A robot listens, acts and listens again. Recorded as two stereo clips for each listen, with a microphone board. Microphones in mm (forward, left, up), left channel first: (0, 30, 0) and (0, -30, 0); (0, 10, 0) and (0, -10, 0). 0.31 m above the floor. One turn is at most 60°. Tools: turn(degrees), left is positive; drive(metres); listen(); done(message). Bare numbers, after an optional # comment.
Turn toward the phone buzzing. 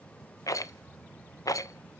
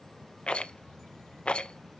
listen()
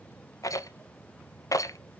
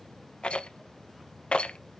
listen()
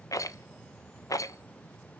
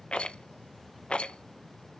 done("I can't make out a phone buzzing, only a rattle.")